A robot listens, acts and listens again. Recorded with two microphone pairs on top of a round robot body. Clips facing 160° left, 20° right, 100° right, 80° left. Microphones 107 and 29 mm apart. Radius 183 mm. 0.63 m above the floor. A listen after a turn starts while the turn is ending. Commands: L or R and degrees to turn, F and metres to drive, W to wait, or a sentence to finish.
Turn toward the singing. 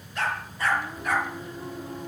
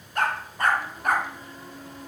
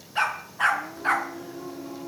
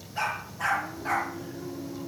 R125
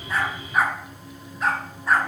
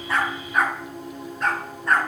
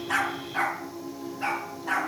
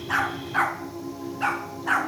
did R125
L10
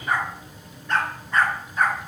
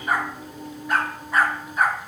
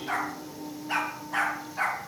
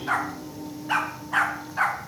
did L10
Found it: singing, straight ahead.